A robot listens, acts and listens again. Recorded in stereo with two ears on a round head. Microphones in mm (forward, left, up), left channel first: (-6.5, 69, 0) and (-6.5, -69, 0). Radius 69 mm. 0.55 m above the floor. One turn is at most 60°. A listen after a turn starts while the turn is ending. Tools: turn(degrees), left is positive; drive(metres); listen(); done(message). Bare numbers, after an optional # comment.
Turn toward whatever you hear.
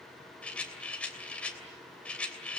turn(30)
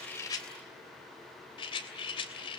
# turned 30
# So it is at 140° left.
turn(60)
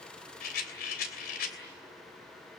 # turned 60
# The rattle is now 105° left.
turn(60)
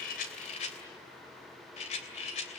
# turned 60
# The rattle is now 50° left.
turn(50)
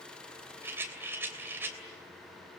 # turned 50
# The rattle is now 15° right.
turn(-15)
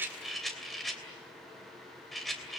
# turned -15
done("Found it: a rattle, straight ahead.")